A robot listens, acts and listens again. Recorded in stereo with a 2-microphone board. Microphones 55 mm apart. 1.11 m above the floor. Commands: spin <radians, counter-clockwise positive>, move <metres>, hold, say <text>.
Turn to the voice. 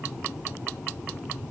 hold
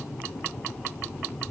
hold
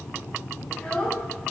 spin 0.35
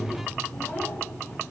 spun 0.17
hold
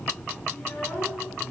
spin 2.62
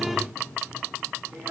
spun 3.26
spin -0.70
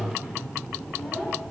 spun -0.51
spin -0.17
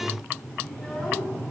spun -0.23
say Facing the child speaking.